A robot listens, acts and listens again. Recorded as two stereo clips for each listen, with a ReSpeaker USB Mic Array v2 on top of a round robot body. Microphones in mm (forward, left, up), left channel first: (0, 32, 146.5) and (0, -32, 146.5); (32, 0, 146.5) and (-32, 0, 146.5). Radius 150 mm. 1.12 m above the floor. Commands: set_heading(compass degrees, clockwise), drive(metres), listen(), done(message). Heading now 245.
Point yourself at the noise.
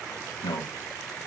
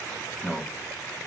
set_heading(165)
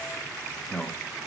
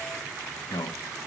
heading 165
set_heading(155)
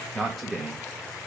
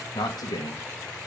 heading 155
done("Facing the man speaking.")